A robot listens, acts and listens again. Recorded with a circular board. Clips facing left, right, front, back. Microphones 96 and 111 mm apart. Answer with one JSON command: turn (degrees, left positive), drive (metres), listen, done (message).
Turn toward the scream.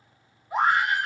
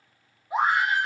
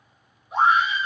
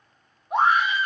{"turn": -160}
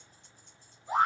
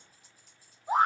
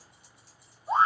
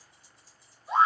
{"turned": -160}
{"turn": -35}
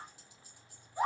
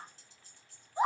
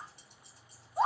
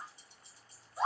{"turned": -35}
{"turn": -15}
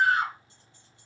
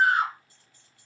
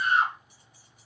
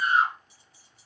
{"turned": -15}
{"done": "Found it: a scream, straight ahead."}